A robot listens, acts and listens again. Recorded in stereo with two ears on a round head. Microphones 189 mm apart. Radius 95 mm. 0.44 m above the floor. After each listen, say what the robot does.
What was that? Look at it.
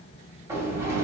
Turn 30° right.
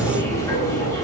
Turn 15° left.
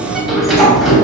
Found it: a sliding door, straight ahead, 2 to 4 m away.